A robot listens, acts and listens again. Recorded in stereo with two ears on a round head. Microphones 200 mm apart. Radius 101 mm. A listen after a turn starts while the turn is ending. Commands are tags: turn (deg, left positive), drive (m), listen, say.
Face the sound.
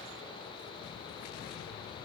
<listen/>
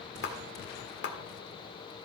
<turn deg="55"/>
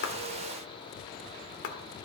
<turn deg="65"/>
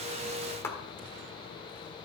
<turn deg="15"/>
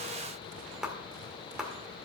<say>Facing the clap, 1 to 2 m away.</say>